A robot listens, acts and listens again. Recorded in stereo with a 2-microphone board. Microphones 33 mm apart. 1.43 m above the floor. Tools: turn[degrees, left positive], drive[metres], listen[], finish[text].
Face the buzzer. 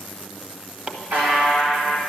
Thought: The buzzer: about 75° right or 105° right.
Action: turn[-75]
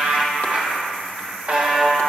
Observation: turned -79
Thought: So it is at 25° right.
Action: turn[-25]
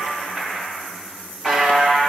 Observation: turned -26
Action: finish[Facing the buzzer, 2 to 4 m away.]